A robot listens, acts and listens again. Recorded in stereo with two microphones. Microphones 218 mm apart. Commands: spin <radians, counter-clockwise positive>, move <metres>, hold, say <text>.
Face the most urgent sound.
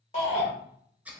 spin 0.61
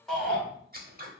say Facing the shout.